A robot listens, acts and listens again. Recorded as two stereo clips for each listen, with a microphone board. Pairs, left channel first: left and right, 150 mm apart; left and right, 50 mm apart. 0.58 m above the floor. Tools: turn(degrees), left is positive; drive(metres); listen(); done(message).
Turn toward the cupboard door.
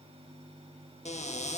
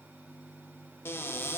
turn(degrees=50)
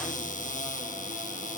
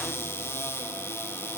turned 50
turn(degrees=70)
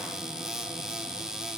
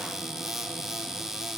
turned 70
done("Found it: a cupboard door, straight ahead, under 1 m away.")